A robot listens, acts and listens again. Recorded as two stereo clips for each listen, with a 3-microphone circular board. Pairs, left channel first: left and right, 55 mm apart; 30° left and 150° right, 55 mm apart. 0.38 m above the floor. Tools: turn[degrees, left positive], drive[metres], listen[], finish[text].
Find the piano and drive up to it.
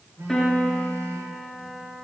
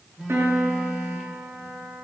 Thought: The piano: 170° left.
Action: turn[170]
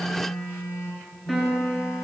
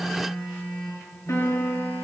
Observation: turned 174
Action: drive[1.0]
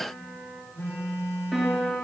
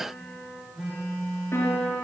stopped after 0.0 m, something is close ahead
Action: finish[Blocked. The piano is further on, straight ahead.]